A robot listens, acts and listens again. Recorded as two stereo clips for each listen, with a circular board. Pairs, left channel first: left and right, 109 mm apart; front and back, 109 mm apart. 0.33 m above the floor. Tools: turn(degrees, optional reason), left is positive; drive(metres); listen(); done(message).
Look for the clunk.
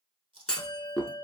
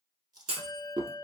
turn(degrees=170, reason="The clunk: 170° left.")
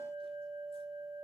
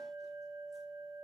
done("I heard a clunk from this way, but can't make it out now.")